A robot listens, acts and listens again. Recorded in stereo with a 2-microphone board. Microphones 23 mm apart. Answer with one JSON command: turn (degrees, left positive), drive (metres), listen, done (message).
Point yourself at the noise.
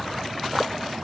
{"listen": true}
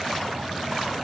{"listen": true}
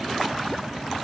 {"done": "I can't make out anything to turn to."}